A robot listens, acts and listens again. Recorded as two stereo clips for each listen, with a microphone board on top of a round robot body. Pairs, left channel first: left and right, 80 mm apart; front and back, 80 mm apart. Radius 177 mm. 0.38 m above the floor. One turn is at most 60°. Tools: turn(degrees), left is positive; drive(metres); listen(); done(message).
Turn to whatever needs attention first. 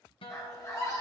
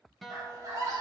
turn(degrees=60)
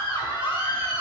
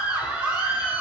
turn(degrees=60)
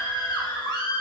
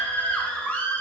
turn(degrees=60)
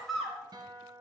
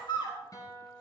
done("Found it: a scream, straight ahead, 2 to 4 m away.")